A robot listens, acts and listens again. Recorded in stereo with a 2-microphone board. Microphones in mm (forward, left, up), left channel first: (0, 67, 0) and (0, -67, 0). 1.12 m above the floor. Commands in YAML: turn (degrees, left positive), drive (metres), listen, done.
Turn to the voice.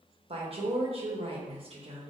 turn: -45
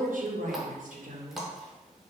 turn: -90
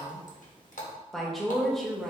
done: "Found it: a woman speaking, straight ahead, 1 to 2 m away."